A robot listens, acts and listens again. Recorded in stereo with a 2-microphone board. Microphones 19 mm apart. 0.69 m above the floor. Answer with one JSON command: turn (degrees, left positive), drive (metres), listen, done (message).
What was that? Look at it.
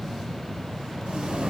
{"turn": -55}
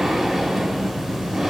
{"done": "Facing the breathing, 2 to 4 m away."}